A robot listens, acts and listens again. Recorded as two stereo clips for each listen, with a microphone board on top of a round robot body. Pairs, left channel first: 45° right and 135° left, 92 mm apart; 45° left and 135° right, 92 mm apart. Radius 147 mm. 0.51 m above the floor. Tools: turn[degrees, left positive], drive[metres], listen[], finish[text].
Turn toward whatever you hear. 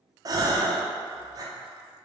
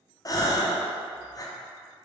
Thought: The gasp: 90° left.
Action: turn[90]
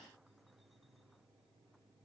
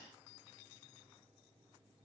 Action: finish[I heard a gasp from this way, but can't make it out now.]